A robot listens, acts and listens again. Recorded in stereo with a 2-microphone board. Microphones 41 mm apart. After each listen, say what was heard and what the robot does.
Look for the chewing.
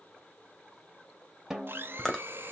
Turn 30° left.
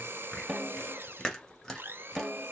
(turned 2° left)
The chewing: about 15° left or 165° left. Turn 15° left.
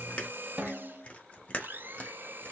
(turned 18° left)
So it is at 145° left. Turn 145° left.
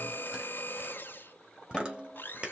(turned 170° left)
The chewing is now 25° right. Turn 25° right.
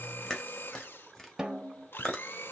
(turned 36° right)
The chewing is now 10° left. Turn 10° left.
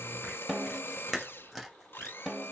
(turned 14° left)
Found it: chewing, straight ahead, 1 to 2 m away.